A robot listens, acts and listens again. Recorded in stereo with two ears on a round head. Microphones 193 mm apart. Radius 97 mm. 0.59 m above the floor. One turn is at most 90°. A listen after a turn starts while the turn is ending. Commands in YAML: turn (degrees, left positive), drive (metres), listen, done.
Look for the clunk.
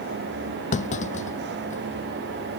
turn: 35
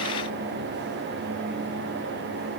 listen: true
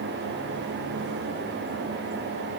done: "I heard a clunk, but can't make it out now. It was about straight ahead or 110° left."